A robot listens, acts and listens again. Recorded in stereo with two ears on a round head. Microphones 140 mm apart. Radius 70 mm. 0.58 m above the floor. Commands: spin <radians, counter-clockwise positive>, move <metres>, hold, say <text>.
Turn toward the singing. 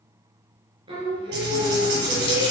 spin -0.44
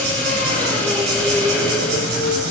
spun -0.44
spin 0.26
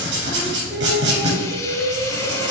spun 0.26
spin 0.26
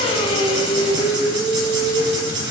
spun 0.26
say Facing the singing.